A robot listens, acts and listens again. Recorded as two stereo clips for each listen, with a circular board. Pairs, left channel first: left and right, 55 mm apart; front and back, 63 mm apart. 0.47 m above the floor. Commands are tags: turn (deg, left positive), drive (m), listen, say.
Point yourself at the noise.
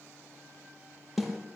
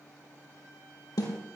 <say>Found it: a snare drum, straight ahead.</say>